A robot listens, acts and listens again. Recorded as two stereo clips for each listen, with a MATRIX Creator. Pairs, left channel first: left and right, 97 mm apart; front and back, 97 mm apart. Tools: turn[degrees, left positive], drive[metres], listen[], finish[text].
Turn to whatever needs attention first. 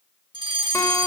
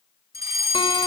Thought: The fire alarm: 125° right.
Action: turn[-125]
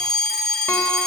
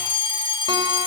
Action: finish[Facing the fire alarm, over 4 m away.]